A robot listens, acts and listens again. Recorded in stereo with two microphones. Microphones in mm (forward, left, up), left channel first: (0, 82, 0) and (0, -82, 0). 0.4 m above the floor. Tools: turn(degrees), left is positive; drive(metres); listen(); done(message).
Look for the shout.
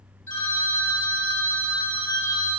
listen()
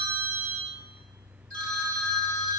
listen()
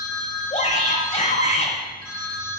turn(degrees=45)
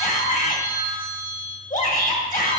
turn(degrees=80)
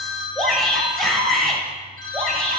done("Found it: a shout, straight ahead, 1 to 2 m away.")